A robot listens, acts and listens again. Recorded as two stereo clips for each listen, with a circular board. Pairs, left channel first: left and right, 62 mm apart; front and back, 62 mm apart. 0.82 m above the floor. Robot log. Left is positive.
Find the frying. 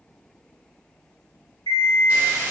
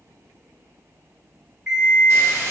note: The frying: 150° right.
cmd yaw -150
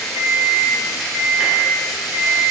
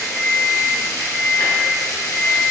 end: Facing the frying, under 1 m away.